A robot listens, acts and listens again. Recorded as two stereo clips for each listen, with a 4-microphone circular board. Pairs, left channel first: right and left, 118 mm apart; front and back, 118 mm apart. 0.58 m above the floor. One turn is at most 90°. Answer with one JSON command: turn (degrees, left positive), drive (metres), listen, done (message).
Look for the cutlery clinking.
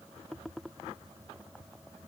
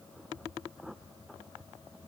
{"listen": true}
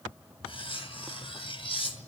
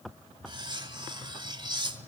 {"turn": -90}
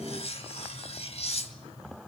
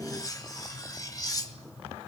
{"turn": -60}
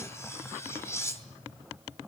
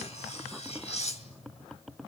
{"turn": -25}
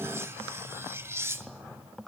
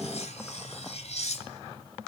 {"turn": 20}
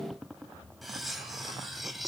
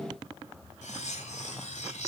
{"done": "Found it: cutlery clinking, straight ahead."}